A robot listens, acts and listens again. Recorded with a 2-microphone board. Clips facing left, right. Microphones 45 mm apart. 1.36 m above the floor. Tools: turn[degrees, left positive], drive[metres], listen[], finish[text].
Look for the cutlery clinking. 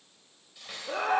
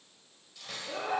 Action: turn[30]
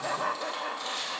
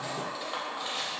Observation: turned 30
Thought: So it is at 15° right.
Action: turn[-15]
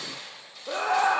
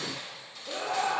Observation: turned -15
Action: finish[Facing the cutlery clinking, 2 to 4 m away.]